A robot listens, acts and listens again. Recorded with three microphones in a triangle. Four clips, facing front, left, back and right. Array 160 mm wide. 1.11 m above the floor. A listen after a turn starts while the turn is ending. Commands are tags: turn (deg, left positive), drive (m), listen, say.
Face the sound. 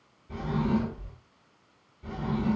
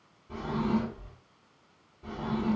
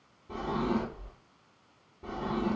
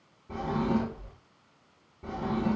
<turn deg="-135"/>
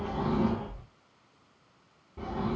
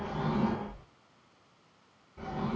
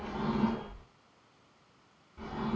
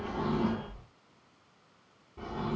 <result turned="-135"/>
<say>Found it: a drawer, straight ahead, 1 to 2 m away.</say>